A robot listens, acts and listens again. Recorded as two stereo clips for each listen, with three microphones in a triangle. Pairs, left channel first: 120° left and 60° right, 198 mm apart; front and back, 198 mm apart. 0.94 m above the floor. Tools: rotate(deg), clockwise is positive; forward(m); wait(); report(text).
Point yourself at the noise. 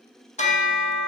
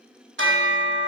rotate(-175)
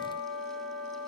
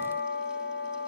rotate(-35)
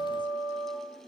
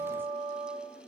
rotate(-10)
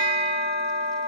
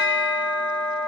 report("Found it: a bell, straight ahead.")